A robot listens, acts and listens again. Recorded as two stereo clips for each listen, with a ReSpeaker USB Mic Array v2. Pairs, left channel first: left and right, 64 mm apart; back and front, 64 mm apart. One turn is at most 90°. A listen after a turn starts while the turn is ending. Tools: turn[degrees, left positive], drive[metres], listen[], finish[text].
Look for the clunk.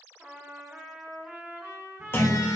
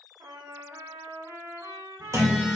Thought: The clunk: 35° left.
Action: turn[35]
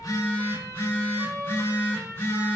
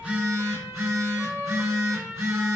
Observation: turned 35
Action: finish[I heard a clunk from this way, but can't make it out now.]